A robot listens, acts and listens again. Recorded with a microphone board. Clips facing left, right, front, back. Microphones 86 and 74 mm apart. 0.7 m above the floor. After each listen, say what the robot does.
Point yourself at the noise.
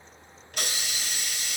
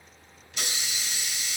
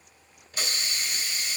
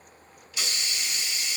Turn 50° left.
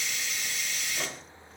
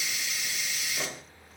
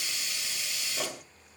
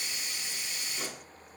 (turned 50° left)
Facing the hiss, 1 to 2 m away.